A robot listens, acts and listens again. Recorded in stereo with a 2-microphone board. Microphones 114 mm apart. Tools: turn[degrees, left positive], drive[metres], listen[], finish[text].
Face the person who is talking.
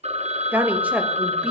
Action: turn[-30]
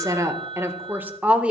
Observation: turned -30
Action: turn[-30]
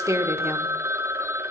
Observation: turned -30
Thought: The woman speaking: about 25° right or 155° right.
Action: turn[-25]
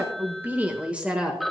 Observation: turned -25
Action: turn[-30]
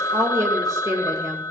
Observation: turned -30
Thought: So it is at 150° right.
Action: turn[-150]
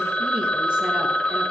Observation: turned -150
Action: listen[]
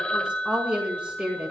Thought: The woman speaking is now 10° right.
Action: turn[-10]
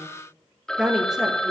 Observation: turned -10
Action: finish[Found it: a woman speaking, straight ahead.]